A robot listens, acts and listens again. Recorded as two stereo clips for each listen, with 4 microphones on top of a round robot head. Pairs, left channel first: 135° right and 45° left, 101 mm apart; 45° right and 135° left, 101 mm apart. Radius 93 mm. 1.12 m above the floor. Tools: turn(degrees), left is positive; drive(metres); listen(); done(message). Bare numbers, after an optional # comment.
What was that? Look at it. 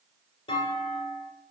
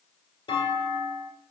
# The clunk: 95° right.
turn(-95)
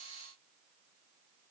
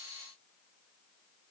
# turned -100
done("I heard a clunk from this way, but can't make it out now.")